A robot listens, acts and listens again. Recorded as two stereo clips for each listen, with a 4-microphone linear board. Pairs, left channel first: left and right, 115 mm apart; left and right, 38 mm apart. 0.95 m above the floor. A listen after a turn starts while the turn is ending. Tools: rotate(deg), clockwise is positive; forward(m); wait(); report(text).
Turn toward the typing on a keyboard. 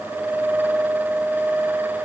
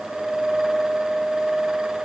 wait()
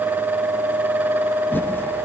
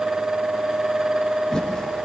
rotate(-15)
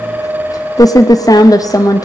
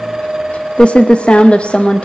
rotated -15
rotate(-150)
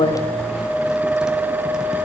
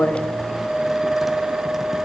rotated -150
wait()
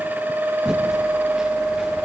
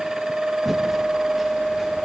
report("Facing the typing on a keyboard.")